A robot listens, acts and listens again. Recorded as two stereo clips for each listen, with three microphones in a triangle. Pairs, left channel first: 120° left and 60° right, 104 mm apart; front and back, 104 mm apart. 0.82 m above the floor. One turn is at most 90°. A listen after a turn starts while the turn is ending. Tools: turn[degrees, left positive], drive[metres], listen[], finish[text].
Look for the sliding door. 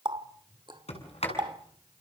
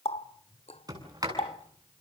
Thought: The sliding door: 125° left.
Action: turn[90]
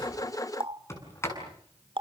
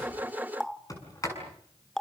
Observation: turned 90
Thought: The sliding door is now 55° left.
Action: turn[55]
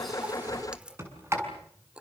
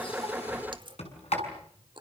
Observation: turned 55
Action: finish[Facing the sliding door.]